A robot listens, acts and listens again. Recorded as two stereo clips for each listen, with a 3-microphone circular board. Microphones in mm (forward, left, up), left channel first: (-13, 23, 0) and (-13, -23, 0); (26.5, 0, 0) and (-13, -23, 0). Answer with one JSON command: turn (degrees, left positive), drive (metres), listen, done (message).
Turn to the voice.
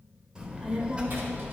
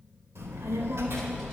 {"turn": -150}
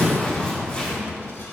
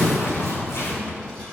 {"turn": 55}
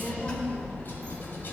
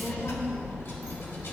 {"turn": 30}
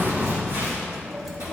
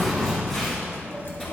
{"done": "Facing the child speaking."}